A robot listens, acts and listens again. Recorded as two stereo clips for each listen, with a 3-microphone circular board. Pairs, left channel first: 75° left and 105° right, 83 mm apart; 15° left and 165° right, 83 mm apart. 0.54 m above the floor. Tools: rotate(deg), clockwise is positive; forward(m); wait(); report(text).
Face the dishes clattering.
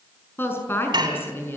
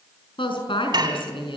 rotate(130)
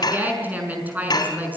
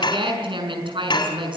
rotate(-40)
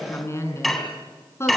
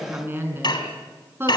rotate(10)
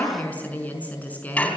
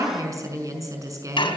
report("Found it: dishes clattering, straight ahead.")